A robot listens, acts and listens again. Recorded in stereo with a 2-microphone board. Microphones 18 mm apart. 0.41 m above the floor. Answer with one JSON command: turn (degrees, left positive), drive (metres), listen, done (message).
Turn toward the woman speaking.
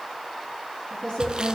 {"turn": 75}
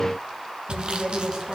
{"turn": 15}
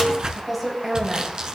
{"done": "Found it: a woman speaking, straight ahead, 2 to 4 m away."}